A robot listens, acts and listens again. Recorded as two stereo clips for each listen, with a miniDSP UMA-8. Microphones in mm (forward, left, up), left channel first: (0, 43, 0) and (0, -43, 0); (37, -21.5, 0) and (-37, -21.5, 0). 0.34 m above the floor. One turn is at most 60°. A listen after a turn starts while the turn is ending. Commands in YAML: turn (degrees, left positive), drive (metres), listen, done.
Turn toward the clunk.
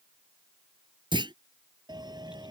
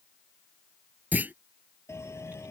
turn: -60
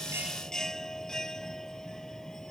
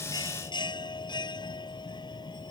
turn: -55
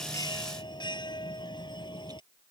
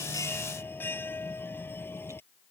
done: "Facing where the clunk came from. I can't hear it now."